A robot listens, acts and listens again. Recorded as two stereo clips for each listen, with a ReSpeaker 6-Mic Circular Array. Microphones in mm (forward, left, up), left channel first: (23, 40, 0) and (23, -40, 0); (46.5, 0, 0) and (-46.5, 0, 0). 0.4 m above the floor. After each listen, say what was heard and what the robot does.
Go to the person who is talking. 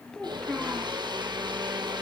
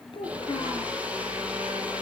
The child speaking: 10° left. Turn 10° left.
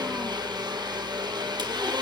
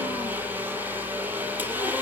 Keep listening.
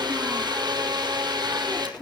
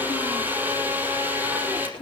Drive 1.0 m forward.
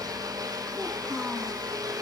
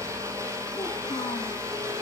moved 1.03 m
Keep listening.
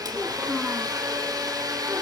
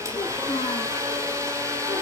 Keep listening.
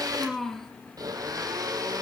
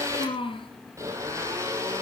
Drive 1.0 m forward.
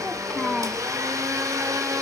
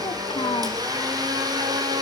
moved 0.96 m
Drive 1.0 m forward.
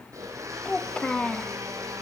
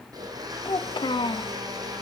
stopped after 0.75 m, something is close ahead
The child speaking is now 15° left. Turn 15° left.
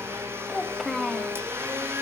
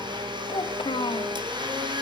I am next to the child speaking.